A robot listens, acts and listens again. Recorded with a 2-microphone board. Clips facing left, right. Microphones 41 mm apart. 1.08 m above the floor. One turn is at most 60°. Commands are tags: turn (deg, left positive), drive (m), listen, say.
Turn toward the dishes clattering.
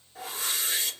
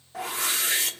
<listen/>
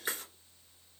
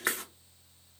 <listen/>
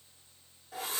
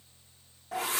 <say>I can't make out dishes clattering, only a whoosh.</say>